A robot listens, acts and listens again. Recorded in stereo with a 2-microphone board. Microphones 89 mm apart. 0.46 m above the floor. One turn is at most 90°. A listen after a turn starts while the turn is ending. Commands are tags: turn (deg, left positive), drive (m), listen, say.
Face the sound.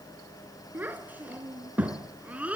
<turn deg="-15"/>
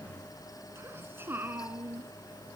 <turn deg="-20"/>
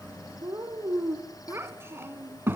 <turn deg="-25"/>
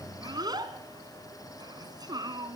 <turn deg="-90"/>
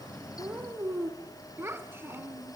<turn deg="-25"/>
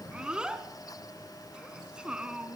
<turn deg="-10"/>
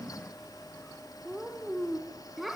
<say>Found it: a child speaking, straight ahead, 2 to 4 m away.</say>